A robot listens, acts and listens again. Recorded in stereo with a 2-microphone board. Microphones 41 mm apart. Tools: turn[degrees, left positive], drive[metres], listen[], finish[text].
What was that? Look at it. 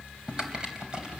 Thought: The typing on a keyboard: about 20° right or 160° right.
Action: turn[-20]
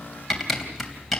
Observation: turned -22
Action: finish[Found it: typing on a keyboard, straight ahead, 2 to 4 m away.]